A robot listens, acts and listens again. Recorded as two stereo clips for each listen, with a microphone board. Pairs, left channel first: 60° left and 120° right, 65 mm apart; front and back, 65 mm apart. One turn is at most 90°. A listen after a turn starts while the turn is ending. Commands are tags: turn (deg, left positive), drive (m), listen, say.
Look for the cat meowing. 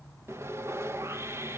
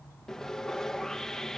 <listen/>
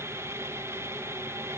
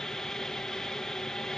<listen/>
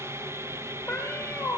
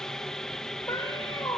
<turn deg="-15"/>
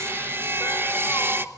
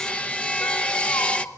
<turn deg="-10"/>
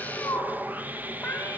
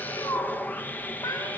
<say>Found it: a cat meowing, straight ahead, over 4 m away.</say>